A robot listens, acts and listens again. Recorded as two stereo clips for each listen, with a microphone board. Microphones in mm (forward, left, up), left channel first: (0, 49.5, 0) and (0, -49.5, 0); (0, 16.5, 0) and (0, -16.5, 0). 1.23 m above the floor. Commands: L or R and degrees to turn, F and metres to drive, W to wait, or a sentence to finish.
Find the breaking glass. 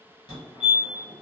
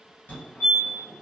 W
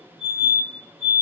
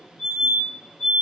W
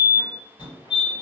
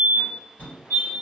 I can't make out breaking glass to turn to.